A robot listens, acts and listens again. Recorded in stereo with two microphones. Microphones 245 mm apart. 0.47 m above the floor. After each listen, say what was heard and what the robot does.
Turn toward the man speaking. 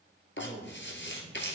Turn 30° right.
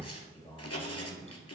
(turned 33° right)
So it is at 35° left. Turn 35° left.
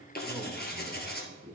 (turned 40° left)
Facing the man speaking.